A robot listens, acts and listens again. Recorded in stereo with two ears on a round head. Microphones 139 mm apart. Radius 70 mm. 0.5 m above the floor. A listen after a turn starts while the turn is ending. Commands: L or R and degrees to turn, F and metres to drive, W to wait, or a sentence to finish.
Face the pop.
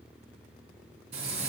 W
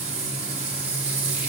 W
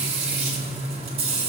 I can't make out a pop, only frying.